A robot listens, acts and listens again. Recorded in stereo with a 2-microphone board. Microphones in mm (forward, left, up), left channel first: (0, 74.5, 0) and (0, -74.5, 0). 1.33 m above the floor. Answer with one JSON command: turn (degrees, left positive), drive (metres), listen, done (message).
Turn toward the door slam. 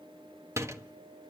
{"turn": -20}
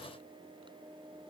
{"listen": true}
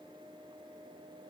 {"done": "I heard a door slam, but can't make it out now. It was about straight ahead or 140° right."}